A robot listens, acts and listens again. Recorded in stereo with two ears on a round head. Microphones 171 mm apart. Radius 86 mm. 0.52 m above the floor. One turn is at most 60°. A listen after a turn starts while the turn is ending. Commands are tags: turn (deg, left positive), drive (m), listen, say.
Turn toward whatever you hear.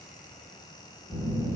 <turn deg="30"/>
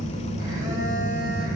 <turn deg="-20"/>
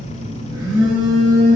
<say>Found it: a phone buzzing, straight ahead, 1 to 2 m away.</say>